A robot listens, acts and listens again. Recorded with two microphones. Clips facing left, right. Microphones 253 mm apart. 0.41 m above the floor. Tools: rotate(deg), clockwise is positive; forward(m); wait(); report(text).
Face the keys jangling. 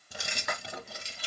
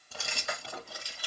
rotate(-25)
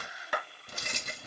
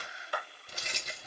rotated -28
rotate(-125)
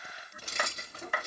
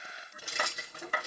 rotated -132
rotate(10)
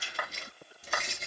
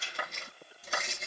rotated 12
report("Facing the keys jangling.")